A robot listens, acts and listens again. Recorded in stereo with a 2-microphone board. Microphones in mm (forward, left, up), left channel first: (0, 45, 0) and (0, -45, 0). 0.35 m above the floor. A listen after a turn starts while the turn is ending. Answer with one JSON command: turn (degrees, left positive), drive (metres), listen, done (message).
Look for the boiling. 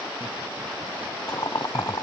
{"turn": 45}
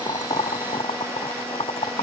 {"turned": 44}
{"turn": 90}
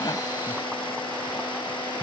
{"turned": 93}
{"listen": true}
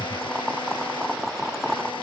{"done": "Facing the boiling."}